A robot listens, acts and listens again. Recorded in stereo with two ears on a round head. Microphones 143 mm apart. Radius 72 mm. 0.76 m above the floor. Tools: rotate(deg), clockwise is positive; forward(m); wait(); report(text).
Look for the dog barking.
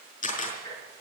wait()
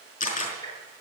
wait()
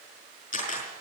report("I can't make out a dog barking to turn to.")